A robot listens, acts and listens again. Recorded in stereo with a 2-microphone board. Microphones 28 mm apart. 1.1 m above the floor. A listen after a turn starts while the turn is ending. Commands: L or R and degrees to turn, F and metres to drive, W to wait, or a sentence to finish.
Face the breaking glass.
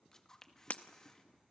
L50
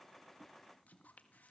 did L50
W
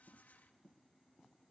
I heard breaking glass, but can't make it out now. It was about straight ahead or 80° left.